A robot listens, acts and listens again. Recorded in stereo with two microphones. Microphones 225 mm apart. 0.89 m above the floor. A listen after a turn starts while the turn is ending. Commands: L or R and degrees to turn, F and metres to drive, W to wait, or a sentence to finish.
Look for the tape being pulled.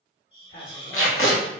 L65
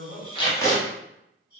L15
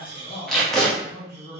Found it: tape being pulled, straight ahead, under 1 m away.